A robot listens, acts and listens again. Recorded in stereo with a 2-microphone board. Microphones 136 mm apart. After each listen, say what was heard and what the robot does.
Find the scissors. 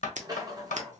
The scissors: about 70° right or 110° right. Turn 70° right.
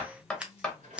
So it is at 10° right. Turn 10° right.
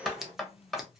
Facing the scissors.